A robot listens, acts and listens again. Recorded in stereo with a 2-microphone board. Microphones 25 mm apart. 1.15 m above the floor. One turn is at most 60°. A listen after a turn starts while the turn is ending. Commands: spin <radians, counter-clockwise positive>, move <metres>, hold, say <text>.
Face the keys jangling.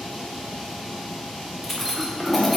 spin 0.52
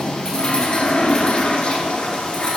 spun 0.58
hold
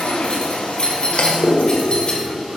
spin 1.05
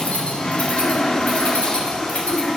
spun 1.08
spin 1.05
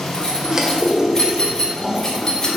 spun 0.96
spin 0.44
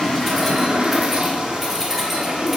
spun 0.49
hold
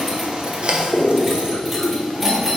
say Facing the keys jangling, 1 to 2 m away.